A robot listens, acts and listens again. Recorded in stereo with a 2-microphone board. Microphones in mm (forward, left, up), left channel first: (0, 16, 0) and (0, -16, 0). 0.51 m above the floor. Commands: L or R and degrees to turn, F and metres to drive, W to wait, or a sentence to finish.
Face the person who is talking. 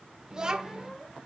R25
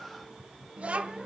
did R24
R130
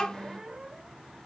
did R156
L30
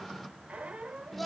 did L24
Facing the child speaking, 1 to 2 m away.